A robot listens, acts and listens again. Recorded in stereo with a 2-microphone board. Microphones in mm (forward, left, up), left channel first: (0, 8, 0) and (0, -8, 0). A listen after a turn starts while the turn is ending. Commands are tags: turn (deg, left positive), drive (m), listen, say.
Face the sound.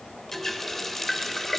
<turn deg="20"/>
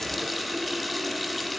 <say>Facing the running tap.</say>